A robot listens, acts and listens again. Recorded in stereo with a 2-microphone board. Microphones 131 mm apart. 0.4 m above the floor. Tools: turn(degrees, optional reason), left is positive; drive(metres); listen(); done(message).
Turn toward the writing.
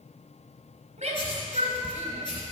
turn(degrees=40, reason="The writing: about 40° left or 140° left.")
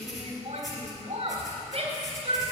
done("Found it: writing, straight ahead, 2 to 4 m away.")